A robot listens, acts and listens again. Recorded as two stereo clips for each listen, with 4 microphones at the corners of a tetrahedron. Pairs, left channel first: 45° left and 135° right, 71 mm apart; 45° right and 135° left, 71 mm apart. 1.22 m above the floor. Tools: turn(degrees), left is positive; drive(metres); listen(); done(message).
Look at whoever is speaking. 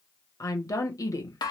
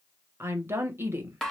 turn(degrees=80)
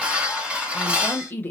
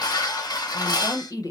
turn(degrees=-15)
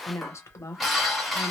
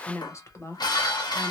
done("Found it: a woman speaking, straight ahead, 1 to 2 m away.")